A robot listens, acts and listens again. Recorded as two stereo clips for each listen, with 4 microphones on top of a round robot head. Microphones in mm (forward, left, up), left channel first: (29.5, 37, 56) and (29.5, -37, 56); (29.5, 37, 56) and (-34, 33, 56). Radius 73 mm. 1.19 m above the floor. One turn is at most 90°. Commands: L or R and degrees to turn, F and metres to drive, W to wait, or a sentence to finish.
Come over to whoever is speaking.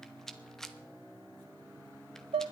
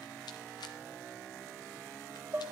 W
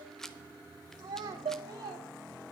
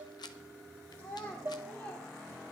R65
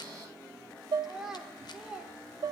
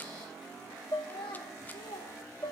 F1.0
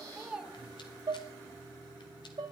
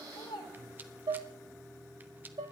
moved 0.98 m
R10
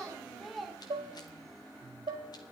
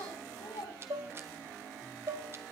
F1.0
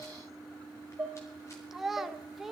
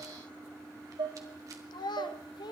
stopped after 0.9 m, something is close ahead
I am next to the child speaking.